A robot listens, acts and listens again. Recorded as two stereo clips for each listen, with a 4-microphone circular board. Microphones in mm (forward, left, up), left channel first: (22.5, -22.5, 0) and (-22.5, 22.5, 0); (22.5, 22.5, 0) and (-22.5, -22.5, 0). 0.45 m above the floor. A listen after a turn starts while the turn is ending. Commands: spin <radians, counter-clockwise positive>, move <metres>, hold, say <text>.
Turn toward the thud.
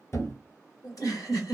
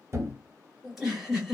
spin -1.57
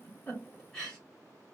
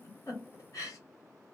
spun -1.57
say Facing where the thud came from. I can't hear it now.